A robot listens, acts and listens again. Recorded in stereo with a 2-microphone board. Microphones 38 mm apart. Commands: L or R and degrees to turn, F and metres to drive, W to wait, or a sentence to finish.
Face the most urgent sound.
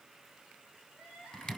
L90
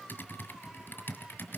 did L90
W
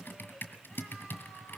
W
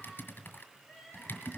Found it: crying, straight ahead.